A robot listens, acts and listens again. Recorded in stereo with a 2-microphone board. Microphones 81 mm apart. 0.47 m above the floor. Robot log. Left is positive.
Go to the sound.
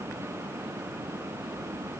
cmd idle
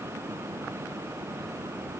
cmd idle
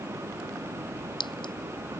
cmd yaw +90
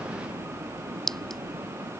cmd fwd 1.0
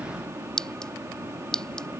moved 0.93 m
note: The clink is now 10° left.
cmd yaw +10
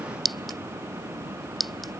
cmd fwd 1.0
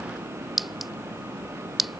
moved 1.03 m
cmd fwd 1.0
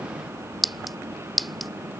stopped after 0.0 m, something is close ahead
end: Arrived at the clink, straight ahead.